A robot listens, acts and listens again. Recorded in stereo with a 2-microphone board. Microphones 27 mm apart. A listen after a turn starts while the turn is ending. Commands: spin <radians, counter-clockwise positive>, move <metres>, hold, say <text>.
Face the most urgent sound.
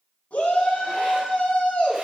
spin 1.13
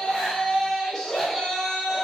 say Facing the shout.